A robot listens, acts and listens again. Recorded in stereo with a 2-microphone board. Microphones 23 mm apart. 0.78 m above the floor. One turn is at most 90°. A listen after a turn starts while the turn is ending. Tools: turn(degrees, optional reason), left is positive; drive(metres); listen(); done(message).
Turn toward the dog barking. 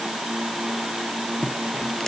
listen()
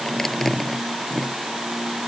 listen()
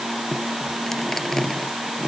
done("I can't make out a dog barking to turn to.")